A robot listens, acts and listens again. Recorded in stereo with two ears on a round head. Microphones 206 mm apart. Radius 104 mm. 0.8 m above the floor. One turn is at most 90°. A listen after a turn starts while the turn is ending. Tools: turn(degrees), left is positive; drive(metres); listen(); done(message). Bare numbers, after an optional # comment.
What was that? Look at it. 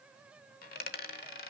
# The dropped coin: about 40° left or 140° left.
turn(40)
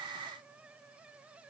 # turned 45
listen()
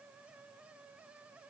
done("I heard a dropped coin, but can't make it out now. It was about 5° right or 95° left.")